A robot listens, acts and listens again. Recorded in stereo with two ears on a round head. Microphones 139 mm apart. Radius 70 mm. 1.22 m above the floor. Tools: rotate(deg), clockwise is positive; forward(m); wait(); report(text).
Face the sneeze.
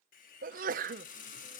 rotate(60)
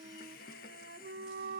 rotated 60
wait()
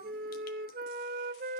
report("I heard a sneeze, but can't make it out now. It was about straight ahead or 60° right.")